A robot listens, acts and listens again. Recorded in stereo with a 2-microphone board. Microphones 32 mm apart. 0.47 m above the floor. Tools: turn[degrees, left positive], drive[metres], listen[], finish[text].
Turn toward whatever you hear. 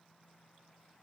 Action: listen[]
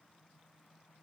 Action: listen[]
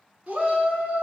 Thought: The shout: about 50° right or 130° right.
Action: turn[-50]
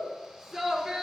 Action: finish[Facing the shout.]